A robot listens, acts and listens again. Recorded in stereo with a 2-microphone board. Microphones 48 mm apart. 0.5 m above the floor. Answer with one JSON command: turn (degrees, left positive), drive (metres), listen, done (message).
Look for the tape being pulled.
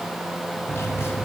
{"listen": true}
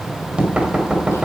{"listen": true}
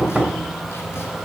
{"done": "I can't make out tape being pulled to turn to."}